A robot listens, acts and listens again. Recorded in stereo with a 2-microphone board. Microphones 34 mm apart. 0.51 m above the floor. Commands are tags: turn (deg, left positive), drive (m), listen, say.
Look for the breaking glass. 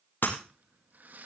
<turn deg="90"/>
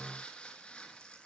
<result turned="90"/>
<say>I heard breaking glass from this way, but can't make it out now.</say>